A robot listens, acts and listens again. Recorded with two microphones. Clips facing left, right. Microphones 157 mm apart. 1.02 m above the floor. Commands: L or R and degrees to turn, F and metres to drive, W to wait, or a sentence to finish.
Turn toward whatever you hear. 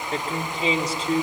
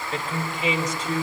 L35
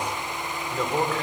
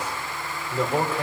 R10
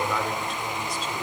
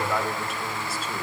Facing the man speaking, 2 to 4 m away.